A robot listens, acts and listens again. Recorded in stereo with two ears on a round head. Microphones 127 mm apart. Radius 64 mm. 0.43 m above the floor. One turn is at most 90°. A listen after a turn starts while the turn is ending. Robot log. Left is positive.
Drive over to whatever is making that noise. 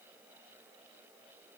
cmd idle
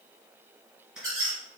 cmd yaw -30
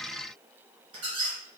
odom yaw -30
note: So it is at 145° right.
cmd yaw -90
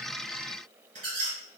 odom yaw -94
note: The squeak is now 55° right.
cmd yaw -55
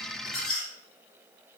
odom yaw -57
cmd fwd 1.0
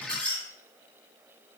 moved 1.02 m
note: The squeak is now 10° left.
cmd yaw +10
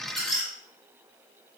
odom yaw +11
cmd fwd 1.0
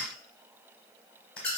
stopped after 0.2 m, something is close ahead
note: The squeak is now 10° left.
cmd yaw +10
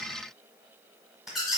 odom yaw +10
end: I am next to the squeak.